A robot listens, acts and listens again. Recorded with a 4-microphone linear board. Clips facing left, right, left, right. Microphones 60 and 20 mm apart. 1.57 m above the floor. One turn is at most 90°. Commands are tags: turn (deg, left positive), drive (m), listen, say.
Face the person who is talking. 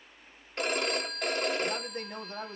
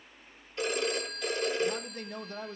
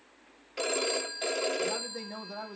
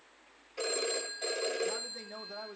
<turn deg="35"/>
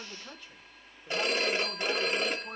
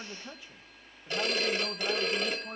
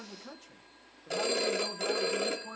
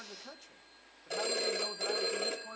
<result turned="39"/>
<turn deg="-10"/>
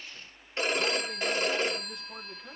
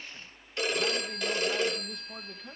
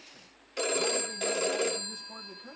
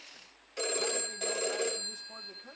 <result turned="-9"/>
<listen/>
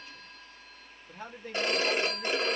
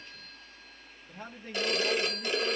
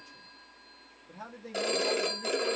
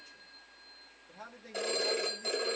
<say>Found it: a man speaking, straight ahead, 2 to 4 m away.</say>